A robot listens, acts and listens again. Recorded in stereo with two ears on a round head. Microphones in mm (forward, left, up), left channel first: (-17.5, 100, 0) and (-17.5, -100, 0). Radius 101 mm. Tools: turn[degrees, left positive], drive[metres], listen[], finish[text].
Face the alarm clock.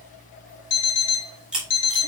Action: turn[90]
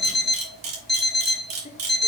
Action: finish[Found it: an alarm clock, straight ahead, 1 to 2 m away.]